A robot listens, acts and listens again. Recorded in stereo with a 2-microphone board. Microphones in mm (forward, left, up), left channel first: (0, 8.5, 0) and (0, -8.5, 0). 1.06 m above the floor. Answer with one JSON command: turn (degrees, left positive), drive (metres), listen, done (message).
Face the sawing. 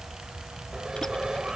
{"turn": -40}
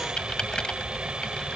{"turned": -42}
{"turn": -95}
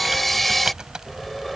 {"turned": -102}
{"done": "Found it: sawing, straight ahead."}